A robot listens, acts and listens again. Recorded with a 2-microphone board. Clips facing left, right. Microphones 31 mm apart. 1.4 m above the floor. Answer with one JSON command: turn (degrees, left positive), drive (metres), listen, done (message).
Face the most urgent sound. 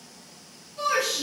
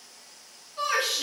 {"turn": -45}
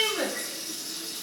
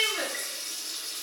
{"done": "Found it: a shout, straight ahead."}